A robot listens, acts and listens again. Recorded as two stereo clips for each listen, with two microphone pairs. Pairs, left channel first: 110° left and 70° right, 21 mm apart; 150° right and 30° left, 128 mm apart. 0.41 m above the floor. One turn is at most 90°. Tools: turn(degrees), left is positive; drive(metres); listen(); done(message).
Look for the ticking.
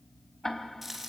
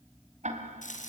turn(degrees=40)
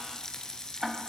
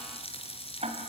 done("Facing the ticking.")